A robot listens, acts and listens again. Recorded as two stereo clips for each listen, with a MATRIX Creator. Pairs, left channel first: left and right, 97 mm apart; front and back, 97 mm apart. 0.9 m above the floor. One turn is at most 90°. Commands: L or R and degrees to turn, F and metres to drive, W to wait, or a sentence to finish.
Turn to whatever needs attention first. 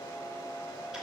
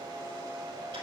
W
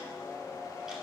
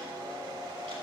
W
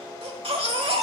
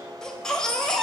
R85
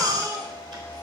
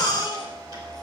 R40
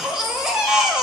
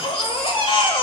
Found it: a baby crying, straight ahead, 1 to 2 m away.